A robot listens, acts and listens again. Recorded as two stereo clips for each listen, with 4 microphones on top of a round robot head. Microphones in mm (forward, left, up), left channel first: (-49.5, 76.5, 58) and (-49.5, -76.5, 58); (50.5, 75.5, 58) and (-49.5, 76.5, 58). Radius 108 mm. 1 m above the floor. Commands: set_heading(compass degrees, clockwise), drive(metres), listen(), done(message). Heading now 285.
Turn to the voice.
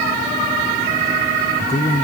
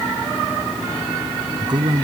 set_heading(150)
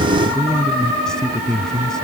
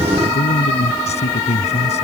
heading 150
done("Facing the man speaking.")